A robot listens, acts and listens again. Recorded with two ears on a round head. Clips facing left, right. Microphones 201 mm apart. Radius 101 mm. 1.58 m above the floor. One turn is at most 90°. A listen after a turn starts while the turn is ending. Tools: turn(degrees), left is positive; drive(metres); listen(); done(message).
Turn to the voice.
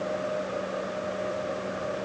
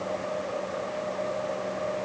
listen()
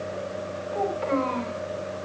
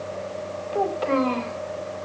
turn(degrees=-60)
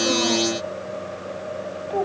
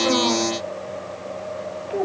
done("Facing the child speaking.")